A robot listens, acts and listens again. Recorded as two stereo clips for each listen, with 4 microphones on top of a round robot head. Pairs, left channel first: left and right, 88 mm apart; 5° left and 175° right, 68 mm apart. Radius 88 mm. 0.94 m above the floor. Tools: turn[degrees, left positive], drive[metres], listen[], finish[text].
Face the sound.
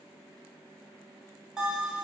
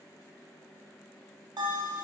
Thought: The bell: 175° right.
Action: turn[-175]
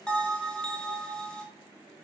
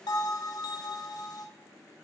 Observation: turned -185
Thought: The bell is now 10° left.
Action: turn[10]
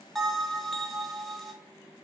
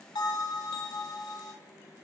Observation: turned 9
Action: finish[Facing the bell.]